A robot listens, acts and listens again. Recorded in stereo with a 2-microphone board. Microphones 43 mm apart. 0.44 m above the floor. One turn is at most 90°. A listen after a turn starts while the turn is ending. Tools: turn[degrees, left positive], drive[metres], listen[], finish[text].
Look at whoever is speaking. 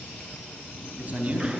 Thought: The man speaking: about 35° right or 145° right.
Action: turn[-35]
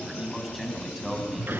Action: finish[Found it: a man speaking, straight ahead, over 4 m away.]